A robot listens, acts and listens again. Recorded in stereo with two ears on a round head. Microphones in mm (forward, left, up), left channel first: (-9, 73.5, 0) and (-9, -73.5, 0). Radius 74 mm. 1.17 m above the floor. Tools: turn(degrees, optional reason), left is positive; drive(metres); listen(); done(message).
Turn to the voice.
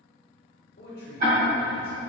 turn(degrees=60, reason="The man speaking: about 60° left or 120° left.")
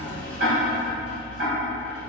listen()
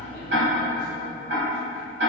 listen()
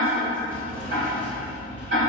done("I heard a man speaking, but can't make it out now. It was about straight ahead or 60° left.")